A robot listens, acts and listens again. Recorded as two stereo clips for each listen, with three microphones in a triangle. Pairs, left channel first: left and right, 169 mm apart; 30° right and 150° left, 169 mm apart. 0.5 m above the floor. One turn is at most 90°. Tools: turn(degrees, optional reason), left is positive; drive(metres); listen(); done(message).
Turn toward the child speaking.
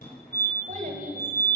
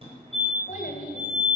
turn(degrees=-60, reason="The child speaking: 60° right.")
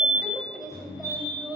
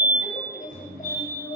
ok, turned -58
done("Facing the child speaking, 2 to 4 m away.")